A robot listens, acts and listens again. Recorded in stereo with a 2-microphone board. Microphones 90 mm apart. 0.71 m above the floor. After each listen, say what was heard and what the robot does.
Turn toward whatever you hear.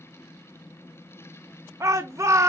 The shout: about 35° right or 145° right. Turn 35° right.
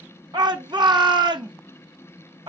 So it is at 105° right. Turn 105° right.
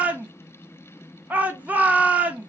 The shout is now 20° right. Turn 20° right.
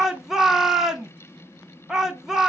Facing the shout.